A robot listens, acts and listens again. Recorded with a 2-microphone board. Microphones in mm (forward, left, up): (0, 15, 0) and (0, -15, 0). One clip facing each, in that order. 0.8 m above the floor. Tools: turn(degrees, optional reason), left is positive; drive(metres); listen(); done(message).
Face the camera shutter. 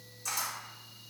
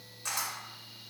turn(degrees=-55, reason="The camera shutter: about 55° right or 125° right.")
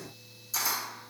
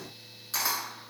turn(degrees=-60, reason="So it is at 60° right.")
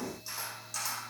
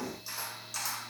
done("Found it: a camera shutter, straight ahead.")